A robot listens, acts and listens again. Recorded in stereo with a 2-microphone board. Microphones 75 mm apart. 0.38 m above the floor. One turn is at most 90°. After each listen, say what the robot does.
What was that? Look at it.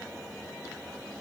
Keep listening.
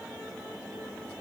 Keep listening.
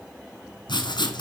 Turn 90° left.
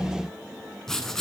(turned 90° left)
Found it: writing, straight ahead, 1 to 2 m away.